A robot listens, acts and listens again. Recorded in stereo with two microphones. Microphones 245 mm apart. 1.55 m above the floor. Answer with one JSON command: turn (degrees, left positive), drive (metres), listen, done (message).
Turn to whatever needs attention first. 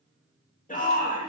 {"turn": 30}
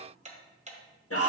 {"turn": 120}
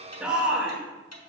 {"done": "Found it: a shout, straight ahead, 2 to 4 m away."}